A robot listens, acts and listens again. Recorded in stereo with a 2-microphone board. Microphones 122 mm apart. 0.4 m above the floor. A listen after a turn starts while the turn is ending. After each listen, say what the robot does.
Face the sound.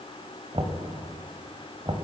Turn 50° right.
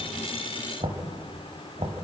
Turn 65° right.
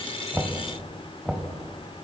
Turn 10° right.
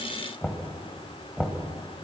Facing the knocking.